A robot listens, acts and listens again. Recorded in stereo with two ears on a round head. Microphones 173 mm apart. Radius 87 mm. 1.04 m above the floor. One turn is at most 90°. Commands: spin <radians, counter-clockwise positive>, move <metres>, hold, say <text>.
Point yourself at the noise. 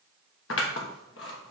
spin 1.31
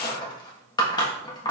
spin 0.35
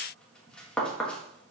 say Facing the scissors.